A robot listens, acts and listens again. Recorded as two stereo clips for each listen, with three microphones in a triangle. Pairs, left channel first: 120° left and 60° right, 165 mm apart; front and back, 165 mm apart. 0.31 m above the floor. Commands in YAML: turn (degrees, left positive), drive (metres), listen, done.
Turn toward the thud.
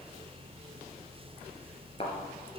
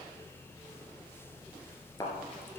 turn: 70
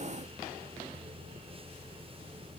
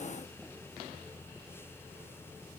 done: "Facing where the thud came from. I can't hear it now."